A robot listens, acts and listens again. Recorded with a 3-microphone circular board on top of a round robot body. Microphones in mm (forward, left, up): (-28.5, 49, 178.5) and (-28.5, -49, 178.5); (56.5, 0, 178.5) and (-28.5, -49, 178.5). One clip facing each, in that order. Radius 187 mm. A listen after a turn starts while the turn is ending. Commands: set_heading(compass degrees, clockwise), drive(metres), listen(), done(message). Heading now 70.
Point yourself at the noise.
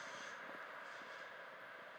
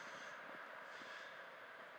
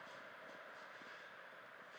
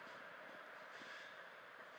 listen()
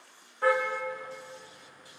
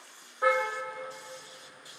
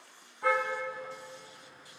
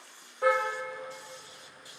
set_heading(235)
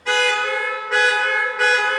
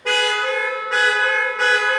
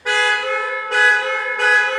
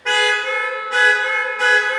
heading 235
done("Facing the car horn.")